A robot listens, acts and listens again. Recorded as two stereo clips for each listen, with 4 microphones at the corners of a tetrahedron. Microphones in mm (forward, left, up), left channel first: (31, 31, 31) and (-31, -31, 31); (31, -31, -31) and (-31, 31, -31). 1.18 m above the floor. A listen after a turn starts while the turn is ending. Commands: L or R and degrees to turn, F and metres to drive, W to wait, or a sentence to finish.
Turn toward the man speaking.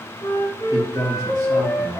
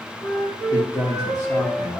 R95
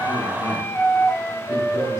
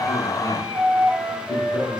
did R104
L10
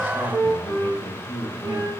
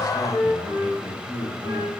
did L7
R15
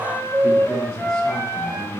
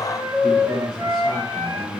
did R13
Found it: a man speaking, straight ahead, over 4 m away.